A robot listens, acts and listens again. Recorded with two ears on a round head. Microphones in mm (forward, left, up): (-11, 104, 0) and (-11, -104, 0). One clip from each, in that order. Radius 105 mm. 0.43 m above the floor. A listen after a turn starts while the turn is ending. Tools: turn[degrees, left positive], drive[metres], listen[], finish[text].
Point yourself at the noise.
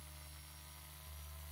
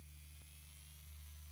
Action: listen[]
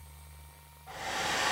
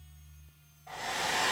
Thought: The hair dryer: about 15° right or 165° right.
Action: turn[-15]
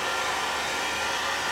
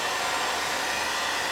Thought: So it is at 155° right.
Action: turn[-155]
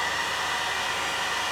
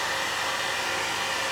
Thought: The hair dryer is now 40° right.
Action: turn[-40]
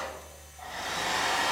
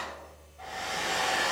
Action: finish[Found it: a hair dryer, straight ahead.]